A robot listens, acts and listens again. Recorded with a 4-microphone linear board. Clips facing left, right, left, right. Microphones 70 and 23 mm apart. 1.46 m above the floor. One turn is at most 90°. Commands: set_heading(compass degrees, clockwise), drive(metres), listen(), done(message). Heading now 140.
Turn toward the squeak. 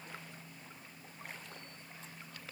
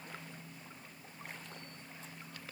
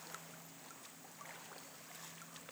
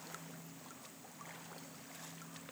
listen()
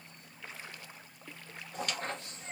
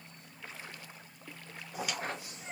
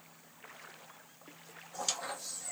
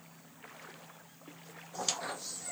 set_heading(170)
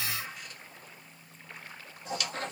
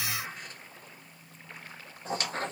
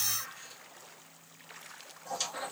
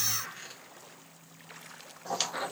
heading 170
set_heading(260)
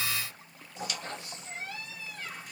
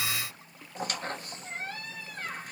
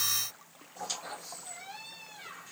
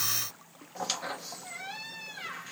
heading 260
set_heading(310)
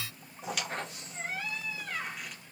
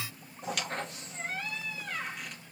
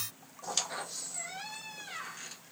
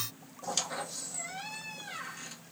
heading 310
done("Found it: a squeak, straight ahead, 1 to 2 m away.")